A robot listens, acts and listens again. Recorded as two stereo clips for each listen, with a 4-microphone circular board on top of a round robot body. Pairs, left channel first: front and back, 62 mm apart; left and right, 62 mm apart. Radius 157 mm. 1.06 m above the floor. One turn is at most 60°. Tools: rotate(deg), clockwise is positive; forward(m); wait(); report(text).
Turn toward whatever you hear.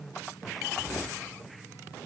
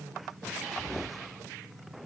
wait()
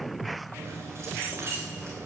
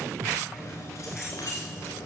rotate(-60)
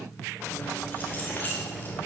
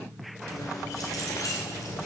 rotate(-60)
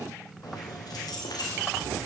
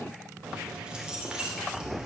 rotate(10)
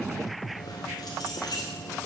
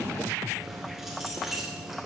report("Facing the keys jangling, 2 to 4 m away.")